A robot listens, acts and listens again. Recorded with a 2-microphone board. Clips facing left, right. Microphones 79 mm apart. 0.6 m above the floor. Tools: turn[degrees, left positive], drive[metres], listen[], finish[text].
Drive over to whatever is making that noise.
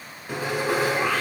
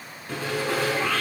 Action: turn[30]
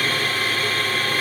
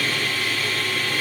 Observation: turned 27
Thought: So it is at 140° left.
Action: turn[140]
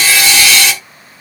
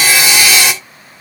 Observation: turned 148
Thought: The sawing is now 10° right.
Action: turn[-10]
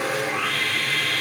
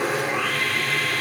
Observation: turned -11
Action: drive[1.0]
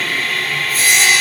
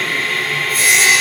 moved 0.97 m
Action: drive[1.0]
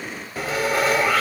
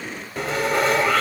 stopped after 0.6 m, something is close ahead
Action: finish[I am next to the sawing.]